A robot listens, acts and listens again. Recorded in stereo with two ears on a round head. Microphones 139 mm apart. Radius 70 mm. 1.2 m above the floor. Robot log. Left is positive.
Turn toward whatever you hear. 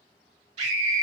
note: The scream: about 45° right or 135° right.
cmd yaw -45
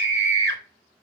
note: So it is at 90° right.
cmd yaw -90
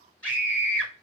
note: The scream is now 10° left.
cmd yaw +10
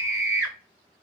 end: Facing the scream.